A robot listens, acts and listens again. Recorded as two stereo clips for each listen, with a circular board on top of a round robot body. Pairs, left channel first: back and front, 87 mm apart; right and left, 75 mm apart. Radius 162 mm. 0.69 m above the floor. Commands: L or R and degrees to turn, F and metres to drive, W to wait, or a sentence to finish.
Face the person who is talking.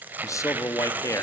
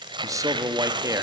L130
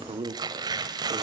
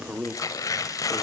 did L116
L15
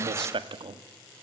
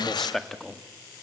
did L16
Found it: a man speaking, straight ahead, 1 to 2 m away.